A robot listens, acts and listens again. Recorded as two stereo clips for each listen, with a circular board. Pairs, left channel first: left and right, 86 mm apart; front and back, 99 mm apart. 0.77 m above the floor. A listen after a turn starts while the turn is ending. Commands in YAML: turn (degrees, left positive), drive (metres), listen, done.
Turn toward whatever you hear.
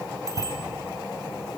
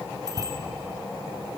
turn: 130
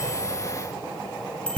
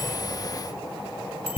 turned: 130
turn: 10
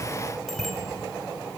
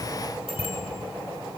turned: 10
done: "Facing the bicycle bell."